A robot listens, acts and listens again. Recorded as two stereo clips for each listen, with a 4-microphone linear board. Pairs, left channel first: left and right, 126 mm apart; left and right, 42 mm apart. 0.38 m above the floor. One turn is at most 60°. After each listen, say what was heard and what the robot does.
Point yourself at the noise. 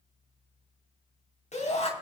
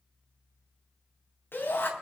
The shout: about 65° left or 115° left. Turn 60° left.
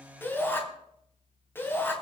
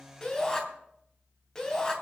So it is at 20° left. Turn 20° left.
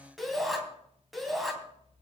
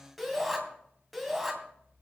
Found it: a shout, straight ahead, 2 to 4 m away.